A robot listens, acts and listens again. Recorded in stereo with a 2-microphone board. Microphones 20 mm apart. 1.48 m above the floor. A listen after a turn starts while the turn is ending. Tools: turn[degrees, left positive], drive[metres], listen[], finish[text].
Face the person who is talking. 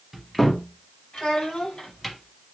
Thought: The child speaking: about 70° left or 110° left.
Action: turn[70]
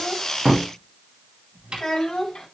Thought: So it is at 40° left.
Action: turn[40]
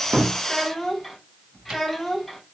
Action: finish[Found it: a child speaking, straight ahead, 2 to 4 m away.]